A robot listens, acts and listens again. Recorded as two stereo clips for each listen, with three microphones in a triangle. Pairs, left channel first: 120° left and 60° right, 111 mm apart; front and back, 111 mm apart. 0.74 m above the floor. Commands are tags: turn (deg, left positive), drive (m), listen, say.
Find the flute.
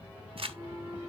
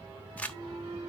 <turn deg="-130"/>
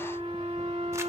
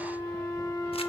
<turn deg="-55"/>
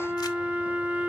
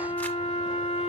<turn deg="15"/>
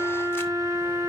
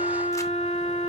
<say>Found it: a flute, straight ahead, 2 to 4 m away.</say>